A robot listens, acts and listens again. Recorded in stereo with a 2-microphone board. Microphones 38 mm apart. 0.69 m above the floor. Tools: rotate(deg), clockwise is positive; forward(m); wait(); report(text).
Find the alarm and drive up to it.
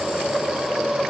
wait()
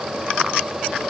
wait()
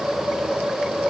report("I can't make out an alarm.")